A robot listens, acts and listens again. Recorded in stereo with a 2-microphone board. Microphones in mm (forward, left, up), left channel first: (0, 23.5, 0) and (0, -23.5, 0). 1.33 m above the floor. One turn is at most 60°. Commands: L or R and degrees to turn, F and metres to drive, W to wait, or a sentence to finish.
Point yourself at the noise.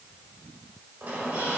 R45
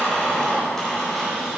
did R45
Found it: a squeak, straight ahead, 2 to 4 m away.